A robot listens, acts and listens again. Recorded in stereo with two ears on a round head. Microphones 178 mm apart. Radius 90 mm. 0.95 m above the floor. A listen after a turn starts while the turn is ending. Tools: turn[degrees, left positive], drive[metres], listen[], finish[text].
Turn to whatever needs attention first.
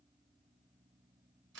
Action: listen[]
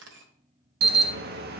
Thought: The alarm: about 55° right or 125° right.
Action: turn[-55]
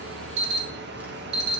Thought: So it is at 65° right.
Action: turn[-65]
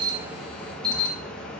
Action: finish[Facing the alarm.]